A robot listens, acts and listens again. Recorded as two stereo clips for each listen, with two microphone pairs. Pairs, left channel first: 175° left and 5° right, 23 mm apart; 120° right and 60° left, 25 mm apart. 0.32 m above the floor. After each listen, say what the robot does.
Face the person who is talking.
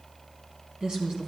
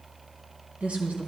Turn 40° left.
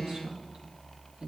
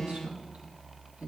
Turn 20° left.
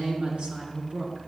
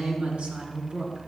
Turn 20° left.
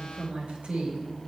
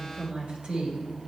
Facing the woman speaking, over 4 m away.